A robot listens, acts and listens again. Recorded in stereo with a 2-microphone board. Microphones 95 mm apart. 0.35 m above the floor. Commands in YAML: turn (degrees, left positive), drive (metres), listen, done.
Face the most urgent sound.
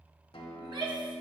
turn: -50
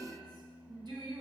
turn: -65
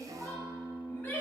turn: 20
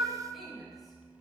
done: "Facing the shout."